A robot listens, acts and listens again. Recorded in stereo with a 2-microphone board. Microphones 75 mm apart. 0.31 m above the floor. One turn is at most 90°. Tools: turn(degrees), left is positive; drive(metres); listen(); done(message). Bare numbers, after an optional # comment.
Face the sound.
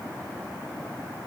listen()
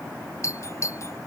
# The doorbell: about 40° left or 140° left.
turn(40)
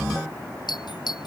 # So it is at 100° left.
turn(90)
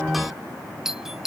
done("Facing the doorbell.")